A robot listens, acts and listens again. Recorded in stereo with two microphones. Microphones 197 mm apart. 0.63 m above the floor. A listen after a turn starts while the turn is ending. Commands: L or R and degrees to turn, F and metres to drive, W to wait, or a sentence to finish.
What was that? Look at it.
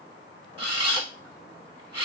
R25
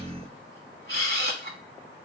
R125
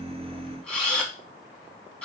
Facing the camera shutter.